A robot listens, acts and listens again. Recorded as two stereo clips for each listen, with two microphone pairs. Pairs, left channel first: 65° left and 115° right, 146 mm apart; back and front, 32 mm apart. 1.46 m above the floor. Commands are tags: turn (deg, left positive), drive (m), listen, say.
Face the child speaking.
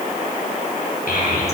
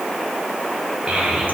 <turn deg="50"/>
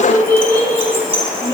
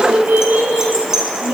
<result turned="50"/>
<say>Facing the child speaking, over 4 m away.</say>